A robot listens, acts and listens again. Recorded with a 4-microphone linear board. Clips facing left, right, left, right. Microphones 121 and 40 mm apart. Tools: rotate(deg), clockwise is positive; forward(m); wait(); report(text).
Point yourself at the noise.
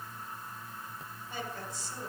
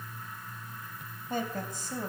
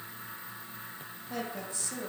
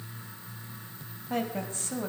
rotate(50)
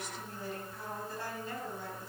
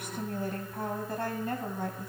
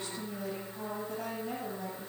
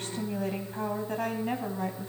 rotate(55)
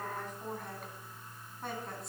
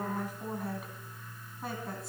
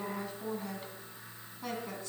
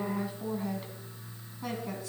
report("Facing the woman speaking, 2 to 4 m away.")